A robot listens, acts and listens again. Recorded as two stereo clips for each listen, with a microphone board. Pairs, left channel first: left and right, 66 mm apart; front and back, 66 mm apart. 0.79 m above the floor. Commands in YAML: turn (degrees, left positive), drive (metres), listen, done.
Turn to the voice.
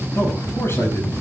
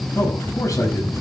turn: 40
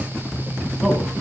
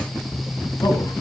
done: "Facing the man speaking."